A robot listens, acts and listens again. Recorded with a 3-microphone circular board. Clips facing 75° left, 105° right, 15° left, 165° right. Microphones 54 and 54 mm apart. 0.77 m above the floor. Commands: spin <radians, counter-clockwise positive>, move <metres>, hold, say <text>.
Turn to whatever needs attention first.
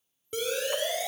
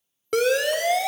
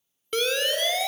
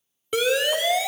spin -1.48
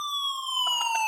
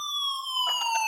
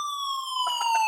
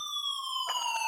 say Found it: a siren, straight ahead.